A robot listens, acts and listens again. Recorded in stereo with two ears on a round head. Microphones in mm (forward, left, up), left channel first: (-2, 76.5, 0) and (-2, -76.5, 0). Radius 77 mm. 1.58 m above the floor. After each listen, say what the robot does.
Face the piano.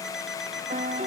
Turn 40° right.
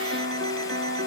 Turn 100° right.
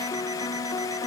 Turn 20° left.
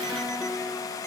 Found it: a piano, straight ahead.